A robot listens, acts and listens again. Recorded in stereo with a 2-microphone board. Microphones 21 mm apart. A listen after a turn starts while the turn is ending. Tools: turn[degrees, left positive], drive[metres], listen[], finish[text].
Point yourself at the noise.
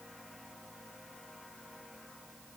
Action: listen[]
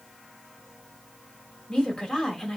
Thought: The woman speaking: about 30° left or 150° left.
Action: turn[30]
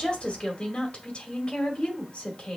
Thought: So it is at 115° left.
Action: turn[115]
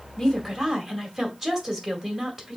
Thought: The woman speaking is now 10° right.
Action: turn[-10]
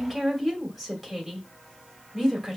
Action: finish[Facing the woman speaking.]